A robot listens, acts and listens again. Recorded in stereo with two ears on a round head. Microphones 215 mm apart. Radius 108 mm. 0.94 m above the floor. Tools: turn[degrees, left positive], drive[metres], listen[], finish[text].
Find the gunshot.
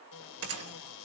Thought: The gunshot: about 65° right or 115° right.
Action: turn[-65]
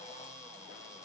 Action: listen[]
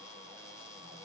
Action: finish[I heard a gunshot, but can't make it out now. It was about straight ahead or 50° right.]